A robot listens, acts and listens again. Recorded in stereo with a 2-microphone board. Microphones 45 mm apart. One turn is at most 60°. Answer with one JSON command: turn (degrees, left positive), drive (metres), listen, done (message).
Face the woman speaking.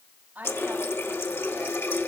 {"turn": -40}
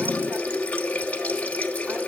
{"listen": true}
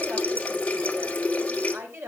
{"turn": -60}
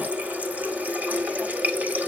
{"turn": -40}
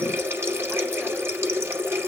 {"listen": true}
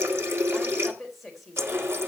{"done": "Found it: a woman speaking, straight ahead."}